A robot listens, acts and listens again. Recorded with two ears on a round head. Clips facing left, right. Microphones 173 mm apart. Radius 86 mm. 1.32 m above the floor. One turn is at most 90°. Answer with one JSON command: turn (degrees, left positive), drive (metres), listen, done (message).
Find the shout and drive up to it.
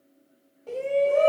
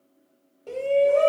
{"turn": -25}
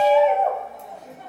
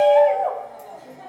{"drive": 1.0}
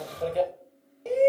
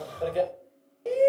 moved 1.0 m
{"drive": 1.0}
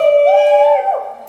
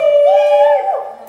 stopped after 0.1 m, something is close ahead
{"done": "I am next to the shout."}